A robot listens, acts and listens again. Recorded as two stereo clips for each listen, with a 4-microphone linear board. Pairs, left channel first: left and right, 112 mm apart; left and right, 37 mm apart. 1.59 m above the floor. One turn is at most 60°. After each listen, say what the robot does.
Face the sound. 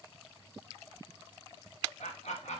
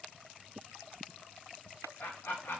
Turn 60° left.
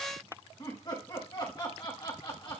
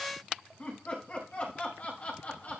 Turn 45° left.
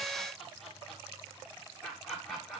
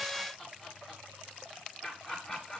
Found it: laughter, straight ahead.